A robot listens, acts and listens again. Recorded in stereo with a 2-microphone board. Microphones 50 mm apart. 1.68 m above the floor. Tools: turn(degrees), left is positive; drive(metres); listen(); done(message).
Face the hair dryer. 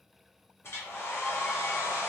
turn(degrees=55)
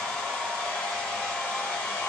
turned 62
turn(degrees=20)
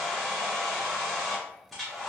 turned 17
done("Facing the hair dryer, 1 to 2 m away.")